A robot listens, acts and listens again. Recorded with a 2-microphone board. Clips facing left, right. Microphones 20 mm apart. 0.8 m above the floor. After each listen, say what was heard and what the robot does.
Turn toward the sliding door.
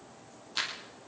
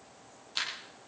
Keep listening.
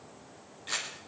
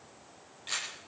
Keep listening.
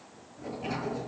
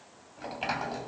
The sliding door: about 70° right or 110° right. Turn 70° right.
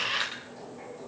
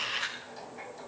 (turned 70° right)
So it is at 35° right. Turn 35° right.
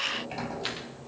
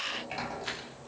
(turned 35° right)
The sliding door is now 15° right. Turn 15° right.
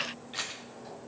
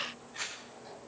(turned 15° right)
Found it: a sliding door, straight ahead.